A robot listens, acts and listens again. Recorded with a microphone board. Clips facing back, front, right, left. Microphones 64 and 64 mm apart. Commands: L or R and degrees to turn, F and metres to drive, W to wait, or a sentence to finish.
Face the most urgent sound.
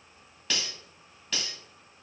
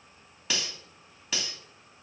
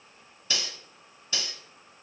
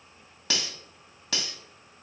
W
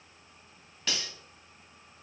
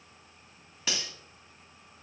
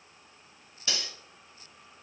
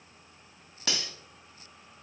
W
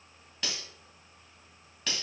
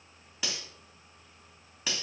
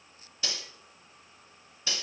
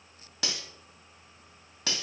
I can't make out anything urgent to turn to.